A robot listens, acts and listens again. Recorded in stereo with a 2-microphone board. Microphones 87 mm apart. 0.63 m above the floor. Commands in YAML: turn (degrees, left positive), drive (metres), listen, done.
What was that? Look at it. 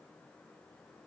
listen: true
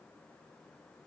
listen: true
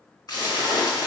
turn: 50
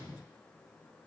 listen: true
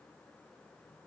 done: "I heard a splash, but can't make it out now. It was about straight ahead or 80° left."